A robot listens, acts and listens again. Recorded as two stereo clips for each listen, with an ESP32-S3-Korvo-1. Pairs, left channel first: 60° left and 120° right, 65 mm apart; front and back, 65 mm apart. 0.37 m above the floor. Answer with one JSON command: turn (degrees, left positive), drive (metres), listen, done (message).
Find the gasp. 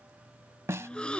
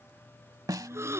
{"turn": 135}
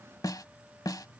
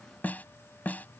{"done": "I heard a gasp from this way, but can't make it out now."}